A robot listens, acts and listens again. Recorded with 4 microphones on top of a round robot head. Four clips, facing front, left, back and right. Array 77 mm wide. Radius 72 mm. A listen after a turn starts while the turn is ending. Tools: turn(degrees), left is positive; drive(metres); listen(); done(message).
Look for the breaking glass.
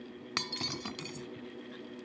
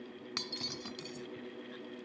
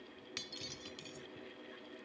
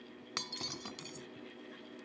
turn(degrees=-20)
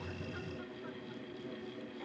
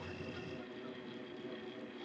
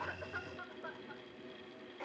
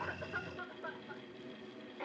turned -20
done("Facing where the breaking glass came from. I can't hear it now.")